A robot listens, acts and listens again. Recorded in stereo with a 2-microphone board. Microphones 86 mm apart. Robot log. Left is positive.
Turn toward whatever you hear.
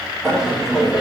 cmd yaw -30
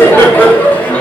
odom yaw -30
note: So it is at 15° left.
cmd yaw +15
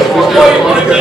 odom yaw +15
note: The laughter is now 10° right.
cmd yaw -10
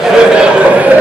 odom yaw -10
note: The laughter is now 20° right.
cmd yaw -20
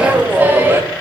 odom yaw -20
note: The laughter is now 25° right.
cmd yaw -25
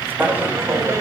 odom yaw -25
note: The laughter is now 30° right.
cmd yaw -30
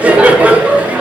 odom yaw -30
note: The laughter is now 15° right.
cmd yaw -15
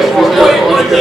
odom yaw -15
end: Facing the laughter, 1 to 2 m away.